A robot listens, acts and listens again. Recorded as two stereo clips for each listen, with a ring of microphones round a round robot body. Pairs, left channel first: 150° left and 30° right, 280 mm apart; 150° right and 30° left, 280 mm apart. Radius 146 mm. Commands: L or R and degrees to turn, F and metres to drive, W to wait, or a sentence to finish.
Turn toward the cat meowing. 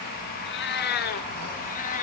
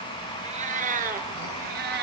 L85
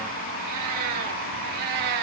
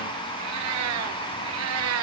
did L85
R15
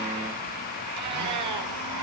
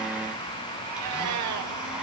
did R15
Facing the cat meowing, 2 to 4 m away.